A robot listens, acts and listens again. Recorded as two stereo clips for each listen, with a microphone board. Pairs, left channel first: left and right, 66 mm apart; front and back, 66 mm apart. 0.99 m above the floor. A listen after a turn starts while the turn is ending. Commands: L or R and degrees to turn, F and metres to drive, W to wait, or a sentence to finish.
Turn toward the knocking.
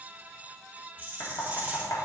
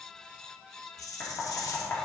L50
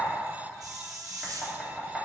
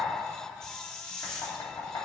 Facing the knocking.